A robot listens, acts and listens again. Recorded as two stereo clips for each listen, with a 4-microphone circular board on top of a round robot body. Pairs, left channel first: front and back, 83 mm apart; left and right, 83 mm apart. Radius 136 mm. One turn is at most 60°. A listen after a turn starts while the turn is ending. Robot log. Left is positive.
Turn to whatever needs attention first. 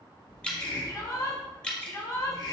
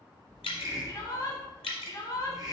note: The shout: 50° left.
cmd yaw +50
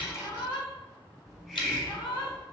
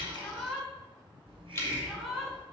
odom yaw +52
end: Found it: a shout, straight ahead.